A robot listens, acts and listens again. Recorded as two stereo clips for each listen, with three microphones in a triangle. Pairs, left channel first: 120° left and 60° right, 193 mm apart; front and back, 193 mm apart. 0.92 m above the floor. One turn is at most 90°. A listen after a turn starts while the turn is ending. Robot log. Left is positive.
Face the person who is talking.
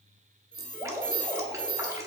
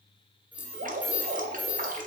cmd idle
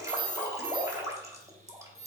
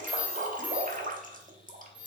cmd idle
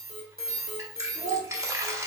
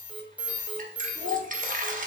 note: The child speaking: 10° right.
cmd yaw -10
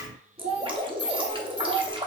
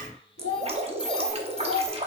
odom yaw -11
end: Facing the child speaking.